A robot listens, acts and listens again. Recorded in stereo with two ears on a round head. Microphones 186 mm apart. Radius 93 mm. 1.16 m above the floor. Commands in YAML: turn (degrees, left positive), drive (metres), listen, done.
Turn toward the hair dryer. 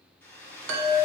turn: 30
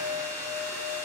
turn: -15
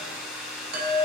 done: "Facing the hair dryer, 2 to 4 m away."